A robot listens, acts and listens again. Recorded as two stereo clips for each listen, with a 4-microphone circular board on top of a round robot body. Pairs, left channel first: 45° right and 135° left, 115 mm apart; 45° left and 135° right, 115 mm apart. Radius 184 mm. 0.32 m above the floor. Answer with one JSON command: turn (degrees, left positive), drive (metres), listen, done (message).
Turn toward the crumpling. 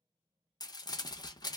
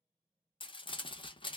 {"done": "Facing the crumpling, under 1 m away."}